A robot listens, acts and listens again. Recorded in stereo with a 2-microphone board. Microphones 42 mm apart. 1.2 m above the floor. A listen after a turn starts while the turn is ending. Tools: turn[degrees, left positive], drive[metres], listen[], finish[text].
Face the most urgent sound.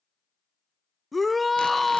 Action: turn[30]
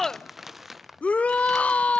Thought: So it is at 150° left.
Action: turn[150]
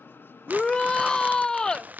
Thought: The shout is now 15° left.
Action: turn[15]
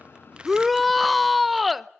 Action: finish[Found it: a shout, straight ahead, under 1 m away.]